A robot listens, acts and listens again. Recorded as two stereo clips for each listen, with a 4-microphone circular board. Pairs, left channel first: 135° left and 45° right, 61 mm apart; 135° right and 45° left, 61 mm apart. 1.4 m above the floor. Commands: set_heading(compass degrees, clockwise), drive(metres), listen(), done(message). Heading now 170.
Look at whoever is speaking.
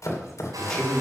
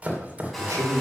set_heading(120)
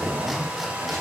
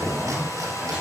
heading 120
set_heading(145)
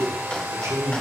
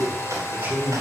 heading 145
set_heading(160)
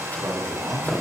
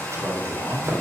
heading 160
set_heading(170)
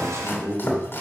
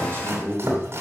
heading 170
done("Facing the man speaking, 2 to 4 m away.")